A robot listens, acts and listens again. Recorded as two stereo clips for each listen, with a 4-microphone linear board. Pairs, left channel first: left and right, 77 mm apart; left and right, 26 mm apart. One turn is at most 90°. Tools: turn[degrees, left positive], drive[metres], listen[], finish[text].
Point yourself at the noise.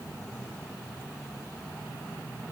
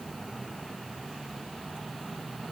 Action: listen[]
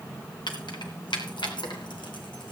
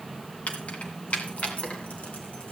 Action: turn[90]
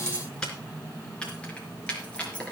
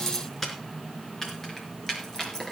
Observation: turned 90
Thought: So it is at 15° left.
Action: turn[15]
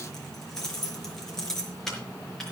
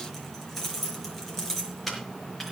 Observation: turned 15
Action: finish[Found it: keys jangling, straight ahead, over 4 m away.]